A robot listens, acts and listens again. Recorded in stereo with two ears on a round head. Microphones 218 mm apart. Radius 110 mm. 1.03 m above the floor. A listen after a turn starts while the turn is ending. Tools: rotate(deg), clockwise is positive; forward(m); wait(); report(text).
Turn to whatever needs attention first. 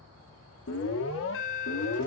rotate(-55)
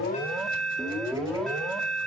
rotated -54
report("Found it: an alarm, straight ahead, 1 to 2 m away.")